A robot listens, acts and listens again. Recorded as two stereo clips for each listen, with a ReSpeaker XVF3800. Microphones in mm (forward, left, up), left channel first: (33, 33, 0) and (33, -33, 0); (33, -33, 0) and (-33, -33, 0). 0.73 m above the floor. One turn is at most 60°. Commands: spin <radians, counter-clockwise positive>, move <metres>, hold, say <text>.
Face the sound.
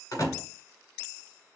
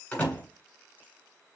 spin 1.05
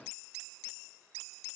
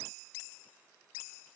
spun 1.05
say I heard a door slam from this way, but can't make it out now.